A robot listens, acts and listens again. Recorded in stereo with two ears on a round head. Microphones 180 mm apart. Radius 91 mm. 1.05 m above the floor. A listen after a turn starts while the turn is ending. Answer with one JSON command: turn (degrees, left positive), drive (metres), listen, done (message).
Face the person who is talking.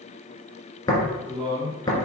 {"turn": -30}
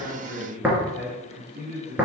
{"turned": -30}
{"turn": -120}
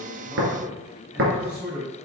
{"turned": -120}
{"done": "Found it: a man speaking, straight ahead."}